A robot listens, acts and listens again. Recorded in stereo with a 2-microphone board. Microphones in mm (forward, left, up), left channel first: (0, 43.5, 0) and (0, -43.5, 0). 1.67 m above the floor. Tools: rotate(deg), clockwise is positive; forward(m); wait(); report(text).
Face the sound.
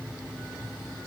wait()
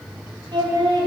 rotate(55)
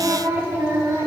rotate(30)
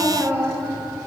rotate(30)
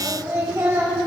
rotate(35)
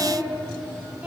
rotate(15)
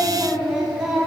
report("Found it: singing, straight ahead, 1 to 2 m away.")